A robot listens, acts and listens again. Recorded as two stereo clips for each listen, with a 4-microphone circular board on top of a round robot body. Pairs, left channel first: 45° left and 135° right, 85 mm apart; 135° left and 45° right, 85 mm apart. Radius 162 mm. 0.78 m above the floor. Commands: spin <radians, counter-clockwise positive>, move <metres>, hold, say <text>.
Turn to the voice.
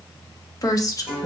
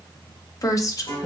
spin 1.57
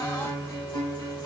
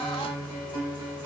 hold
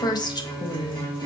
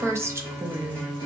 spin 0.17
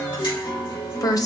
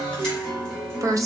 say Facing the woman speaking.